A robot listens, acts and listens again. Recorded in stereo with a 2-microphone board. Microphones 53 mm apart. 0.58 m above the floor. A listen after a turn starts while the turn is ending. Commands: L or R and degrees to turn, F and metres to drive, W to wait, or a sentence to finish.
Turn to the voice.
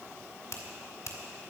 W
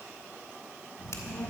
L25
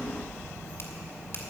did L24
L130
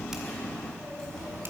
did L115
L15
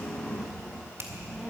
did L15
Facing the child speaking, 2 to 4 m away.